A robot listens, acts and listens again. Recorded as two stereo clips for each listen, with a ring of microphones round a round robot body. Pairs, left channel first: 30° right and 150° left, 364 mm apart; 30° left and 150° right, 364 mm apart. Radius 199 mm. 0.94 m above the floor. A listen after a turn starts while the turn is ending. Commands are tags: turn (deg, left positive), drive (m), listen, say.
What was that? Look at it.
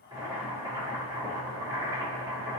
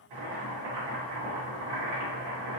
<turn deg="-130"/>
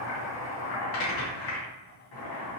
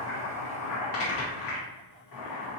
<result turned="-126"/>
<say>Found it: boiling, straight ahead.</say>